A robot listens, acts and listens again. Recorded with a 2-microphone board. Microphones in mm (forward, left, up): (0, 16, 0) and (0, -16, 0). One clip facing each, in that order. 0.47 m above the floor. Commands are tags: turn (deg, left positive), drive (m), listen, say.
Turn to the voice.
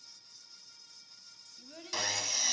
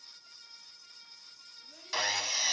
<turn deg="30"/>
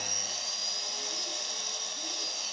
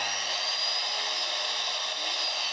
<listen/>
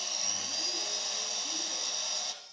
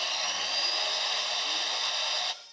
<listen/>
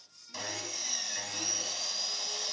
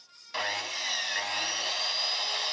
<say>I heard a child speaking, but can't make it out now. It was about straight ahead or 120° left.</say>